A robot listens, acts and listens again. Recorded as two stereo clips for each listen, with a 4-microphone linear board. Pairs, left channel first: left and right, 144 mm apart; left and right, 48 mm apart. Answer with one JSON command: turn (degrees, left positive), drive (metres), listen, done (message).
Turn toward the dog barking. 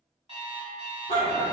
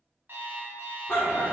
{"turn": 65}
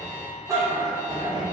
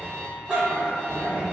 {"turn": -35}
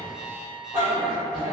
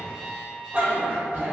{"turn": -40}
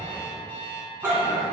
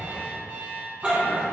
{"turn": -15}
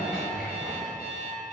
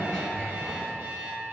{"done": "Found it: a dog barking, straight ahead, 1 to 2 m away."}